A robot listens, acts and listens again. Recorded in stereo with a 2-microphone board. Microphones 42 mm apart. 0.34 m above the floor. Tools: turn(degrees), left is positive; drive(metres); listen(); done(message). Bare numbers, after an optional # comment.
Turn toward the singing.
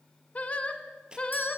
# The singing: about 25° left or 155° left.
turn(25)
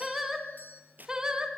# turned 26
# So it is at 15° right.
turn(-15)
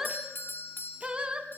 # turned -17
# The singing is now 25° right.
turn(-25)
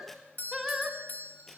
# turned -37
done("Found it: singing, straight ahead, 1 to 2 m away.")